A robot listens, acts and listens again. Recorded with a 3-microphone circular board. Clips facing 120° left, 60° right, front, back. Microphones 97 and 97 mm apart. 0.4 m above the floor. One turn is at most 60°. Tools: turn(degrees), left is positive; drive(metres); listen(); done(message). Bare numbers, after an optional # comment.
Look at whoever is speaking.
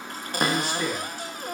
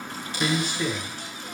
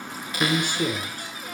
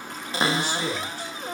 # The man speaking: 30° left.
turn(30)
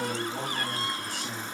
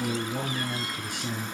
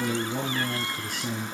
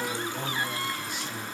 # The man speaking is now 10° left.
turn(10)
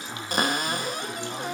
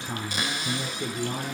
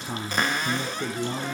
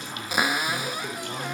done("Found it: a man speaking, straight ahead, over 4 m away.")